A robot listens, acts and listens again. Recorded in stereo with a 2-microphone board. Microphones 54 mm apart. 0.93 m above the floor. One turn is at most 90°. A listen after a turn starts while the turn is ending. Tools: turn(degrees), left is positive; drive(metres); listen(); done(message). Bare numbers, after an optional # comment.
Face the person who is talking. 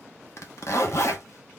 listen()
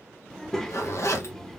turn(30)
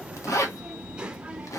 # So it is at 20° right.
turn(-20)
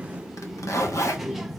done("Facing the child speaking.")